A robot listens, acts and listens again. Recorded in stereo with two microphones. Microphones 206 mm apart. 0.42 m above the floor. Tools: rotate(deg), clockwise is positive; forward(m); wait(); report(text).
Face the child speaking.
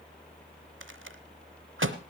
wait()
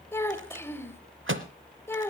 rotate(-30)
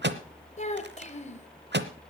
rotate(-140)
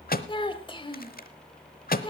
rotate(-30)
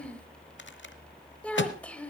report("Found it: a child speaking, straight ahead.")